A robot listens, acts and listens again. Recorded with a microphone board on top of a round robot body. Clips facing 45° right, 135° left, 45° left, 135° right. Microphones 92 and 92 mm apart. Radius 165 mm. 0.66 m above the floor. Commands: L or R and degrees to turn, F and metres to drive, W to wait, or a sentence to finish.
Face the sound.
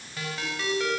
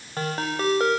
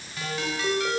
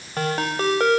R175
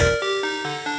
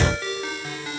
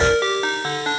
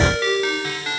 R15
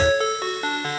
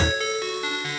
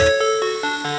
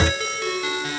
Facing the ringtone, 2 to 4 m away.